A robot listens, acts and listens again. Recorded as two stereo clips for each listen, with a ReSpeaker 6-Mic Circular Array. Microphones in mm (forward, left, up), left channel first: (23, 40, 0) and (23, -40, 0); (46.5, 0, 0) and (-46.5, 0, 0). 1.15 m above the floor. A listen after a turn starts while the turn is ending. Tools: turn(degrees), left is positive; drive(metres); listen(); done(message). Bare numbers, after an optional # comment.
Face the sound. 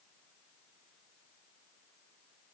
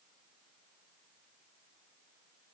listen()
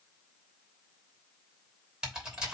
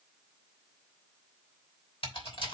# The typing on a keyboard: 10° right.
turn(-10)
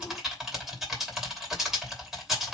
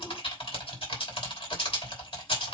done("Facing the typing on a keyboard, 2 to 4 m away.")